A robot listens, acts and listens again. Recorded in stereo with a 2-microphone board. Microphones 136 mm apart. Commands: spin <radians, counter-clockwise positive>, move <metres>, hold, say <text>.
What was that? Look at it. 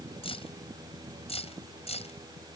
spin 0.87
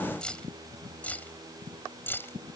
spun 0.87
spin 0.26
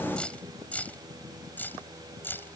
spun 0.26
spin 0.26
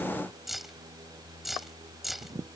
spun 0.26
say Found it: keys jangling, straight ahead.